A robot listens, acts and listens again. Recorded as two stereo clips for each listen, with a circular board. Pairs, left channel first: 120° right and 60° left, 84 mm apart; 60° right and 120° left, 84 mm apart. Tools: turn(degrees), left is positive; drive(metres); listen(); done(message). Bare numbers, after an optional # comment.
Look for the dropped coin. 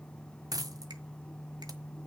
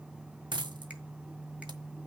# The dropped coin: 100° left.
turn(100)
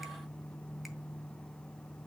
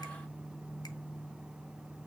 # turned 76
# Nothing new. It was at 25° left.
turn(25)
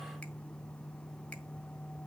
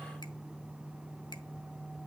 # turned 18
done("I heard a dropped coin from this way, but can't make it out now.")